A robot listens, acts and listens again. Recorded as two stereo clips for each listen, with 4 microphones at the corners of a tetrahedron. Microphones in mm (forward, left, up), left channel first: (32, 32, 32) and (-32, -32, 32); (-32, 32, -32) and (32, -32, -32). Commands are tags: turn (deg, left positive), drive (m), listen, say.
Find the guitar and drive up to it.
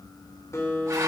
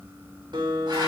<turn deg="-10"/>
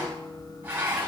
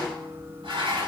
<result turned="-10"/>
<listen/>
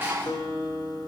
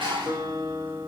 <drive m="1.0"/>
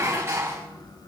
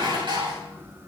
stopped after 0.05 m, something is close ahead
<listen/>
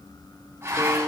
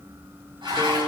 <listen/>
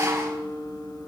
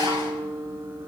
<say>Blocked. The guitar is further on, straight ahead.</say>